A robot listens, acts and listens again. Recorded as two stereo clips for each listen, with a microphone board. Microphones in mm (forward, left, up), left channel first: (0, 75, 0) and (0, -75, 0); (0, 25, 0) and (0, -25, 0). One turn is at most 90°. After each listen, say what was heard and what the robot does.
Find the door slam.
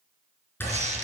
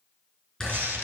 Turn 30° left.
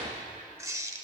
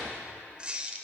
Keep listening.
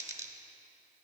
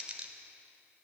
I heard a door slam, but can't make it out now. It was about 15° right or 135° left.